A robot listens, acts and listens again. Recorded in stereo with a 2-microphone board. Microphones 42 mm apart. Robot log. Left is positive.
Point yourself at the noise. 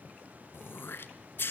note: The throat clearing: about 65° left or 115° left.
cmd yaw +65
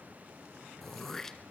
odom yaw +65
note: So it is at 10° left.
cmd yaw +10
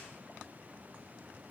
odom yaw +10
cmd idle
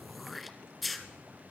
end: Facing the throat clearing, 1 to 2 m away.